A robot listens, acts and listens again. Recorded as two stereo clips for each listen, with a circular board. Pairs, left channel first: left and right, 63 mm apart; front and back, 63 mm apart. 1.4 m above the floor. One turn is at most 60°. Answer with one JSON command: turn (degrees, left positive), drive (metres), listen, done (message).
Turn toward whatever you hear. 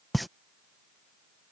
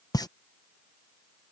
{"done": "Facing the pop."}